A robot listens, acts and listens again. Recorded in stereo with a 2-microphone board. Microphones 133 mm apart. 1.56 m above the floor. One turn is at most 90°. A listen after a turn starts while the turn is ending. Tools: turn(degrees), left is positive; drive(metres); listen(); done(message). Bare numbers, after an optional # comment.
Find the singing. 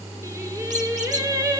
# The singing: about 25° right or 155° right.
turn(-25)
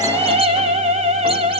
# So it is at 125° right.
turn(-90)
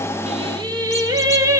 # The singing is now 25° right.
turn(-25)
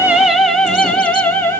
# The singing is now 15° left.
turn(15)
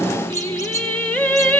# The singing is now 10° left.
turn(10)
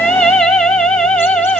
done("Found it: singing, straight ahead, 1 to 2 m away.")